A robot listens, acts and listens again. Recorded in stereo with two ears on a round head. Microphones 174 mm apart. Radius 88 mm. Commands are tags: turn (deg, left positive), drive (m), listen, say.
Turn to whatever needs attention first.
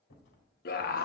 <turn deg="50"/>
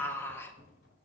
<turn deg="15"/>
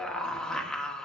<say>Facing the scream.</say>